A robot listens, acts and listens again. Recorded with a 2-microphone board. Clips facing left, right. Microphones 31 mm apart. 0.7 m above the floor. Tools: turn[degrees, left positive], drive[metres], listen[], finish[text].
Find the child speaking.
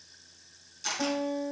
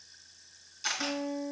Action: listen[]
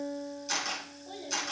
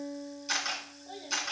Action: turn[30]
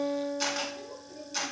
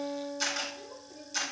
Thought: So it is at 155° left.
Action: turn[155]
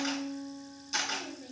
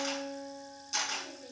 Action: listen[]
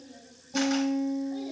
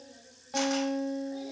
Thought: The child speaking is now 10° left.
Action: turn[10]
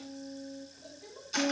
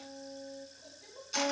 Action: finish[Facing the child speaking.]